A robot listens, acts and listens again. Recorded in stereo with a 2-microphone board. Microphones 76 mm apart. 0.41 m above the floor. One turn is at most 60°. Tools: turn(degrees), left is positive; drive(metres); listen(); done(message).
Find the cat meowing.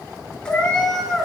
turn(degrees=30)
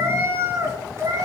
turn(degrees=-40)
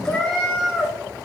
done("Facing the cat meowing, 2 to 4 m away.")